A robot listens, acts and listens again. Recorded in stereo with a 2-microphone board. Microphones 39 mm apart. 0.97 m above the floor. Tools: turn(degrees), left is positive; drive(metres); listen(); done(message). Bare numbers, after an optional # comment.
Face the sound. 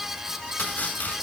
# The chopping: about 45° left or 135° left.
turn(45)
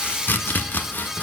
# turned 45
# So it is at 80° left.
turn(80)
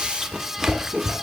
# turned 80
# The chopping is now 10° right.
turn(-10)
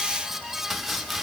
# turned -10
done("Facing the chopping, 1 to 2 m away.")